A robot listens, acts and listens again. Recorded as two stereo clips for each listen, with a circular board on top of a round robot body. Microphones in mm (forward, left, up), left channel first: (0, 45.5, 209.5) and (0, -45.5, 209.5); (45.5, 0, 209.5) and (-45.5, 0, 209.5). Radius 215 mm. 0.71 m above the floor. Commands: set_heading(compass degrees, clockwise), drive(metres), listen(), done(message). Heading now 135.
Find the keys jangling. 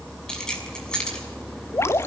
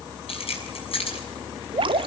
set_heading(125)
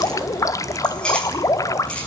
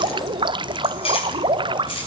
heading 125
listen()
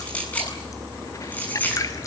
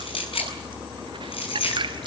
set_heading(105)
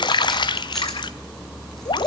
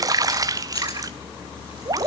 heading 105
listen()
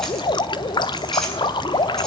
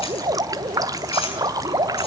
listen()
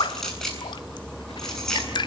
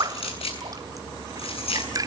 done("Facing the keys jangling.")